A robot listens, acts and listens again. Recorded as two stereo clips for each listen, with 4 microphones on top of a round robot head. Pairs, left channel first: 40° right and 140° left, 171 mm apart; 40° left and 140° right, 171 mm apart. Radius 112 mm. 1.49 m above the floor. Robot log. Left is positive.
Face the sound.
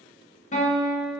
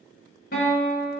note: The guitar: 10° left.
cmd yaw +10
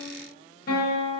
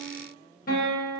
end: Facing the guitar, 1 to 2 m away.